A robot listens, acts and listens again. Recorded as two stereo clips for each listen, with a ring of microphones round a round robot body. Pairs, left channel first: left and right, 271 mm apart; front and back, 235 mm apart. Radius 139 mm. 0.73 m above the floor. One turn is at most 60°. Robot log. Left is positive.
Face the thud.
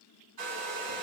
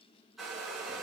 cmd idle
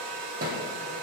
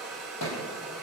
note: The thud: 35° right.
cmd yaw -35
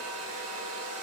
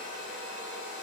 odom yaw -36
end: Facing where the thud came from. I can't hear it now.